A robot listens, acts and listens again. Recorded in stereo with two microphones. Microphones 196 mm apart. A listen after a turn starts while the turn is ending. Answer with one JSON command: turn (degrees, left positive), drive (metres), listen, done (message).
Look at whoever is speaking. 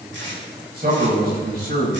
{"turn": -50}
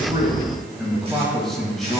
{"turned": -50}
{"done": "Found it: a man speaking, straight ahead."}